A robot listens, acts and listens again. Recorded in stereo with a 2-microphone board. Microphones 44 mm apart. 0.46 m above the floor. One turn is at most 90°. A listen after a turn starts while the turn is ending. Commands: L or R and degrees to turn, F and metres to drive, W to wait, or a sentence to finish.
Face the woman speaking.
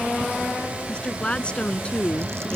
L25
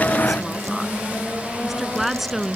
Facing the woman speaking.